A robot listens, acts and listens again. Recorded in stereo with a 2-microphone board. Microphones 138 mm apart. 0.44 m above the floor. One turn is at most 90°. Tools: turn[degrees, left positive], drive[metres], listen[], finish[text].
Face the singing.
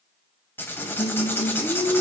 Thought: The singing: about 45° left or 135° left.
Action: turn[45]
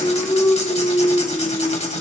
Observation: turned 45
Thought: The singing: about 50° left or 130° left.
Action: turn[50]
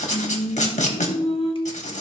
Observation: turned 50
Thought: So it is at 50° left.
Action: turn[50]
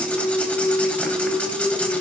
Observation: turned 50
Action: finish[Found it: singing, straight ahead.]